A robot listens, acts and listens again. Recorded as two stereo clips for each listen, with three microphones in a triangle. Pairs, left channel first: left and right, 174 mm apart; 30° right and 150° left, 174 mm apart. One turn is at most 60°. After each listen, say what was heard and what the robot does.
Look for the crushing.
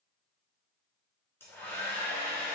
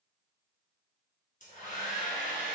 Keep listening.
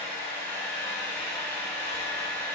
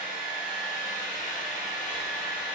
Keep listening.
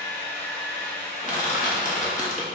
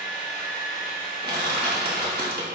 The crushing: 130° left. Turn 60° left.
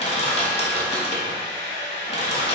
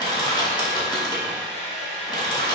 The crushing is now 35° left. Turn 35° left.
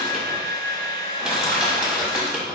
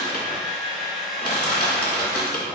Found it: crushing, straight ahead.